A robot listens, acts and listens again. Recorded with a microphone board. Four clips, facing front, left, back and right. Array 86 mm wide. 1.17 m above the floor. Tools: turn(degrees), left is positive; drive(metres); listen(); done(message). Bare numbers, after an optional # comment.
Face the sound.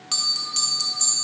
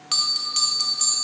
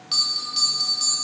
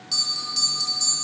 # The bell: 70° left.
turn(70)
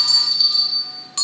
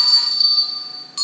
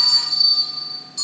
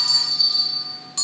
done("Found it: a bell, straight ahead, under 1 m away.")